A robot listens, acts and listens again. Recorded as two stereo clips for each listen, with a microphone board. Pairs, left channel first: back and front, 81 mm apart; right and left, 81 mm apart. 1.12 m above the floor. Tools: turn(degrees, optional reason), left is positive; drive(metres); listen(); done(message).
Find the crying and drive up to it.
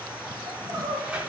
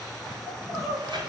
turn(degrees=45, reason="The crying: 45° left.")
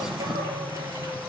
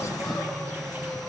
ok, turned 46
listen()
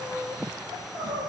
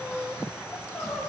drive(metres=1.0)
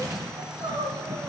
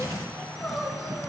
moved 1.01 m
drive(metres=1.0)
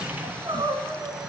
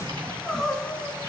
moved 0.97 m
drive(metres=1.0)
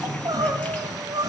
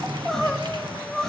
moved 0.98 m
turn(degrees=-10, reason="The crying is now 10° right.")
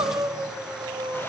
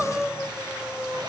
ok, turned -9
drive(metres=1.0)
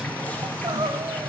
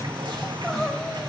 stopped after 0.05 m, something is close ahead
done("Arrived at the crying, straight ahead.")